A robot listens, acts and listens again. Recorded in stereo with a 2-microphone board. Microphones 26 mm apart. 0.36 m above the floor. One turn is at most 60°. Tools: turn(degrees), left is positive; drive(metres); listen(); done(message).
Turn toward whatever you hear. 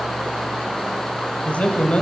turn(degrees=55)
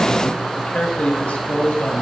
turn(degrees=55)
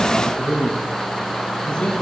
turn(degrees=30)
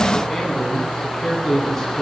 done("Found it: a man speaking, straight ahead, 2 to 4 m away.")